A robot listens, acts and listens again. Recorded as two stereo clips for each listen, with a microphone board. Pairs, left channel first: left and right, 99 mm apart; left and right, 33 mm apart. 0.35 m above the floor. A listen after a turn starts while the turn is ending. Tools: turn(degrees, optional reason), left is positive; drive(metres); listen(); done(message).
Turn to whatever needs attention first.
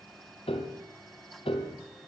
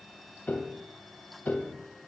listen()
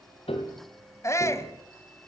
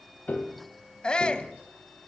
turn(degrees=30, reason="The shout: about 30° left or 150° left.")
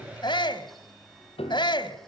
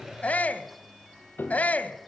turn(degrees=115, reason="So it is at 115° left.")
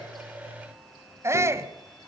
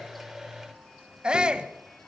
turn(degrees=-35, reason="The shout is now 35° right.")
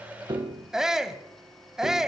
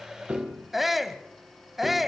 done("Facing the shout, 1 to 2 m away.")